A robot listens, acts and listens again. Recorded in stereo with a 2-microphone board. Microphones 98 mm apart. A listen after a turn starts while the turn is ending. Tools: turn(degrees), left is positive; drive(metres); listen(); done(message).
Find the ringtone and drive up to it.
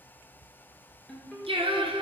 turn(degrees=30)
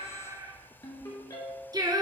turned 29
turn(degrees=145)
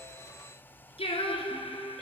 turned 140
drive(metres=1.0)
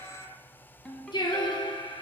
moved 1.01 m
turn(degrees=10)
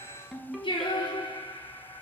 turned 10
drive(metres=1.0)
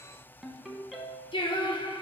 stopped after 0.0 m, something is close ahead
done("I am next to the ringtone.")